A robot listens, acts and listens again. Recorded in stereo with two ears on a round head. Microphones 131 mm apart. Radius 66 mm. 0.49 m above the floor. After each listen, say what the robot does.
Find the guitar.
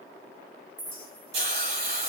Keep listening.
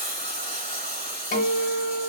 Turn 65° left.
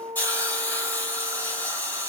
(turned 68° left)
Turn 45° left.
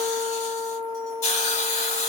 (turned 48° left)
Found it: a guitar, straight ahead.